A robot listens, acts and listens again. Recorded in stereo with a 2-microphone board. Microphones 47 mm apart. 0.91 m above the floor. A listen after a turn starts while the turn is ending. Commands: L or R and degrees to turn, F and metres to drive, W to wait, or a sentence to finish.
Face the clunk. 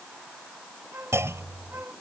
R90
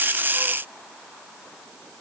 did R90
I heard a clunk from this way, but can't make it out now.